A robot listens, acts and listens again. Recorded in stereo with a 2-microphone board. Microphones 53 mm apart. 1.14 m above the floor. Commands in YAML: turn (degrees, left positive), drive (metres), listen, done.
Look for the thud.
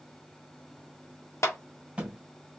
turn: -25
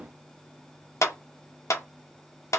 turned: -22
listen: true
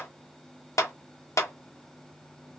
done: "I heard a thud, but can't make it out now. It was about straight ahead or 135° right."